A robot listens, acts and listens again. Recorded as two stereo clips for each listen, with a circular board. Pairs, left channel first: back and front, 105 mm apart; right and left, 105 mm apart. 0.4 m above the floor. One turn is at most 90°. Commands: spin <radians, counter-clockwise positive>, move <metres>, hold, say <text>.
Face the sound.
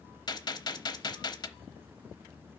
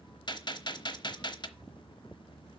spin -1.57
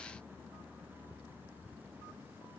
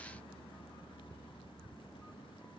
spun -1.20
spin -1.13
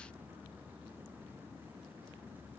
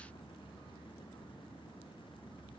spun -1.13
say Facing where the gunshot came from. I can't hear it now.